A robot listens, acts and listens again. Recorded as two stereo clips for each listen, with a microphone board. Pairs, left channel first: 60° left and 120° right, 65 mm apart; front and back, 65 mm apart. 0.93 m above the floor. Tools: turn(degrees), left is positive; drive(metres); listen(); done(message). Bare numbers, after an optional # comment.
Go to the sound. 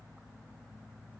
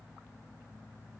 listen()
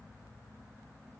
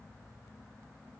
listen()
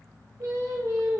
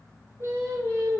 # The singing: 135° right.
turn(-135)
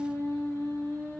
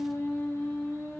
# The singing is now 40° left.
turn(40)
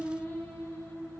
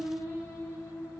# The singing is now 30° left.
turn(30)
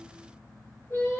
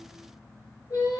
# The singing is now 10° left.
turn(10)
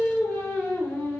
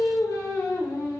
drive(1.0)
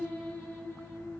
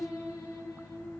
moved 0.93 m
drive(1.0)
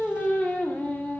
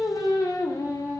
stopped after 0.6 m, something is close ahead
done("I am next to the singing.")